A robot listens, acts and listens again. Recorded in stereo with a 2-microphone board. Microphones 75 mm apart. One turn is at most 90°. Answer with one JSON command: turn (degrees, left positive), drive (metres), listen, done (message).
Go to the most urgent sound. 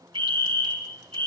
{"turn": 20}
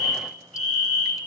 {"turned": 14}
{"drive": 1.0}
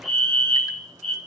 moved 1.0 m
{"drive": 1.0}
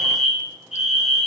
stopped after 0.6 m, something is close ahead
{"done": "Something is in my way. I am facing the fire alarm but have not reached it."}